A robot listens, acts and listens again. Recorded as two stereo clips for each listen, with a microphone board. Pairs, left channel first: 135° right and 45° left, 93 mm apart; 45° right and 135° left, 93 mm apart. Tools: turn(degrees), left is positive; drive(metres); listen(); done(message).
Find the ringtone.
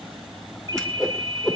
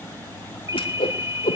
turn(degrees=85)
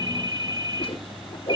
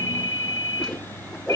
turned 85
done("Found it: a ringtone, straight ahead, 1 to 2 m away.")